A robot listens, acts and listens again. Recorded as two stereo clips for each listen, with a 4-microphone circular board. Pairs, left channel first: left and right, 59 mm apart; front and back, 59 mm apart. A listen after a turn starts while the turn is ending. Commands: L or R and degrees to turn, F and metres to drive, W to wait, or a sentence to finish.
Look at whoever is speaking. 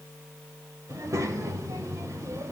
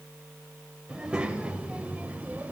R115
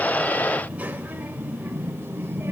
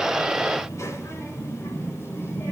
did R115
R40
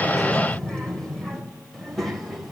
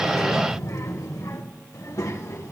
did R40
Facing the child speaking, 2 to 4 m away.